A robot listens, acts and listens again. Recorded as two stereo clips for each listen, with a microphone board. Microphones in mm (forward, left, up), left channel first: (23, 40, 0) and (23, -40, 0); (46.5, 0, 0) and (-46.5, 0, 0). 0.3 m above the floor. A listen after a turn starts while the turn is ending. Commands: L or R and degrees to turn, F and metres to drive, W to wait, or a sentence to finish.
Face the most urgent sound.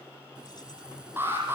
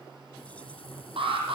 R155
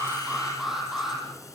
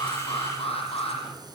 Found it: an alarm, straight ahead.